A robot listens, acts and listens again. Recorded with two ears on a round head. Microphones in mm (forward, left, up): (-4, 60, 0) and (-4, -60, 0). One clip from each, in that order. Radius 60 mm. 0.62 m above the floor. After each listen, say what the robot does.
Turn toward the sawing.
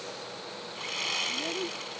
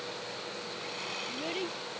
Turn 50° left.
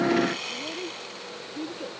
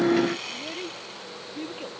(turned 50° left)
Found it: sawing, straight ahead.